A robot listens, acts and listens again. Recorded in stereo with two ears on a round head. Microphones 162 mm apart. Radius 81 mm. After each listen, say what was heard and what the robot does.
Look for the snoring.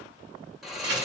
Turn 30° left.
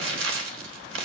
Keep listening.
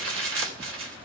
Keep listening.
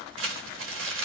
I heard snoring, but can't make it out now. It was about 30° right or 150° left.